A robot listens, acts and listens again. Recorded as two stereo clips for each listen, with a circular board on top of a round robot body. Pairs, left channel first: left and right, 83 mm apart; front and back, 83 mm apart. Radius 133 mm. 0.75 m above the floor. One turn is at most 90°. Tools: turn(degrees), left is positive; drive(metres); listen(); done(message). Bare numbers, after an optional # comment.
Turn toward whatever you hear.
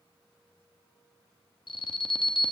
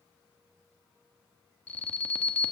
# The alarm: 70° left.
turn(70)
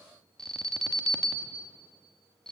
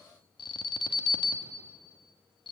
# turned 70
done("Found it: an alarm, straight ahead, 1 to 2 m away.")